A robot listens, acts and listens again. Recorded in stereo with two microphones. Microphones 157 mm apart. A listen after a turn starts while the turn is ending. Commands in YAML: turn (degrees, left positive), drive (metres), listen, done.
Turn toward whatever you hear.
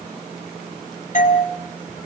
turn: 55
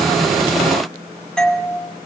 done: "Facing the doorbell."